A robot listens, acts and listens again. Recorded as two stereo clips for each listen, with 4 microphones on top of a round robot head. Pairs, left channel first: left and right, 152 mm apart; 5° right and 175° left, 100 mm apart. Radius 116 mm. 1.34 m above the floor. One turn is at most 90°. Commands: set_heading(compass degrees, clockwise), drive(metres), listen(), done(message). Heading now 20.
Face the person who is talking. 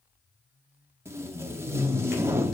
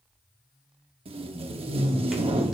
listen()
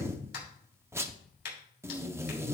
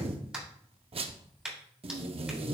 listen()
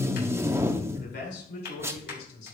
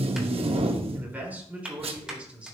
set_heading(290)
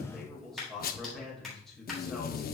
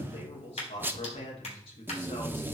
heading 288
done("Found it: a man speaking, straight ahead.")